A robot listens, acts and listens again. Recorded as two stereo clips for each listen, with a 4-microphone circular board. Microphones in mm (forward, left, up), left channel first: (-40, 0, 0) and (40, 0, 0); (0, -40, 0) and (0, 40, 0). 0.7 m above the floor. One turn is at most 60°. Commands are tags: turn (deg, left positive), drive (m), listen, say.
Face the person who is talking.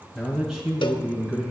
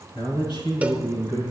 <turn deg="-60"/>
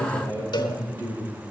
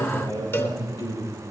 <turn deg="-55"/>
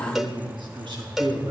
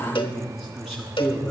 <say>Found it: a man speaking, straight ahead, over 4 m away.</say>